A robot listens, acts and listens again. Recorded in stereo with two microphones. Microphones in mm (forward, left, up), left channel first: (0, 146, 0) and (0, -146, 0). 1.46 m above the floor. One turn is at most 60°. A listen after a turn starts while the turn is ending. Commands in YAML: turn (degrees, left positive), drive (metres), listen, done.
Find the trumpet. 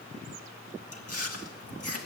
listen: true
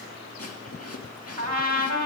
turn: -60
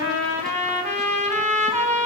turn: -25
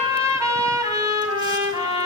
turn: -10
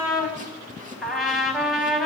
done: "Found it: a trumpet, straight ahead, 2 to 4 m away."